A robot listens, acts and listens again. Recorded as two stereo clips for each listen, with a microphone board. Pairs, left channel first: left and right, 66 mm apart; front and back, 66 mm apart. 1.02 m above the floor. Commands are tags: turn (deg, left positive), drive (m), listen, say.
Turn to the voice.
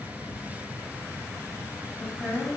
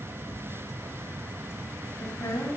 <say>Found it: a woman speaking, straight ahead.</say>